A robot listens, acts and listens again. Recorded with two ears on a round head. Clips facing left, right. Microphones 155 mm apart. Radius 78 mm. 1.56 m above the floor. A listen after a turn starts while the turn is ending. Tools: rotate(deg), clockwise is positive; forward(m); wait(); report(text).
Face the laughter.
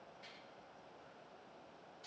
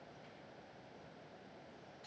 wait()
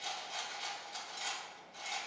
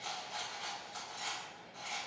wait()
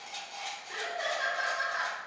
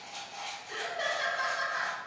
rotate(35)
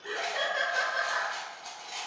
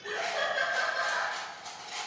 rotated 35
rotate(-10)
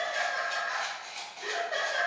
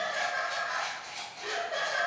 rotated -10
report("Facing the laughter.")